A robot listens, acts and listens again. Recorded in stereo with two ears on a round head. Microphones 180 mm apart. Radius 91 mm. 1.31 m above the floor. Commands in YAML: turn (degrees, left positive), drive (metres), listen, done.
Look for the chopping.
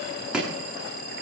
turn: -30
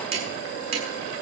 turn: -145
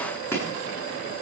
turn: 10
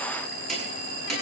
done: "Facing the chopping, over 4 m away."